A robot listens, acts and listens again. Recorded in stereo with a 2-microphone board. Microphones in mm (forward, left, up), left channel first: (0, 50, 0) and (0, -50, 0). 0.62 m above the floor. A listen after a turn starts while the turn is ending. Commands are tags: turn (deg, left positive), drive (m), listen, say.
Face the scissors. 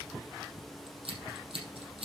<turn deg="-70"/>
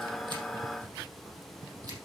<listen/>
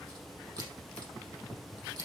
<turn deg="-40"/>
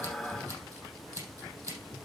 <turn deg="-35"/>
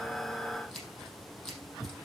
<say>Facing the scissors.</say>